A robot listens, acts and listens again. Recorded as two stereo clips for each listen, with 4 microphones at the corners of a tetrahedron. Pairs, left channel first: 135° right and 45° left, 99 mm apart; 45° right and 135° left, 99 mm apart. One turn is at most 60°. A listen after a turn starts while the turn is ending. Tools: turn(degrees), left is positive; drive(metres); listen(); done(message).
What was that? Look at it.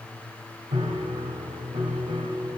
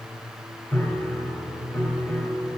turn(degrees=20)
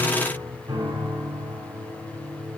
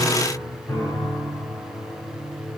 done("Found it: a piano, straight ahead, 2 to 4 m away.")